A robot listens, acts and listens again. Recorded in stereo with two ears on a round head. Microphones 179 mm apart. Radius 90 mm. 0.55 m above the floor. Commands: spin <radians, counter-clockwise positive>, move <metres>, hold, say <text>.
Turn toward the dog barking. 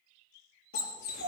spin 0.96
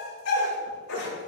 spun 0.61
spin 1.40
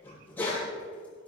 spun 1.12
spin 0.17
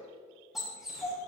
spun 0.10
say Found it: a dog barking, straight ahead, over 4 m away.